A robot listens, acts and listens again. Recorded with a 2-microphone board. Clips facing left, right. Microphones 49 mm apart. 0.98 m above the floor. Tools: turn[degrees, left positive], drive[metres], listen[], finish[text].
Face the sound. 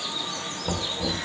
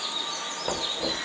Thought: The knocking: about 30° right or 150° right.
Action: turn[-30]
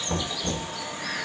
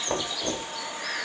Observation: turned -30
Thought: So it is at 120° right.
Action: turn[-120]
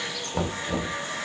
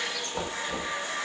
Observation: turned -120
Thought: The knocking is now 15° left.
Action: turn[15]
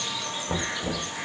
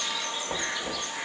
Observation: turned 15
Action: finish[Found it: knocking, straight ahead, 2 to 4 m away.]